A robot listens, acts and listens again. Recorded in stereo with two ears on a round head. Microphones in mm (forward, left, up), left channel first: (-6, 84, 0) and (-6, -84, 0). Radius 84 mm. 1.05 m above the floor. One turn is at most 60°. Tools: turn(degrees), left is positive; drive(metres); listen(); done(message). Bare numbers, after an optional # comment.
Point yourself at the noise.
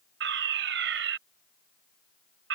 # The fire alarm: about 70° right or 110° right.
turn(-60)
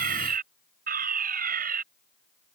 # So it is at 50° right.
turn(-50)
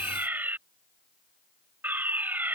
# The fire alarm is now 10° right.
turn(-10)
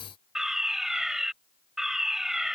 done("Facing the fire alarm.")